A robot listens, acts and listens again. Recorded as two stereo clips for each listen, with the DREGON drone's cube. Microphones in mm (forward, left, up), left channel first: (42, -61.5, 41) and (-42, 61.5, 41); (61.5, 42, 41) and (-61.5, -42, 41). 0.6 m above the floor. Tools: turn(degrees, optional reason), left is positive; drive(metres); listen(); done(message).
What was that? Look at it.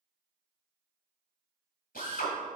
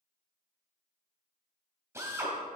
turn(degrees=-75, reason="The drill: 75° right.")
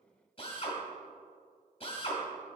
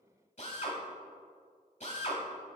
done("Found it: a drill, straight ahead, 1 to 2 m away.")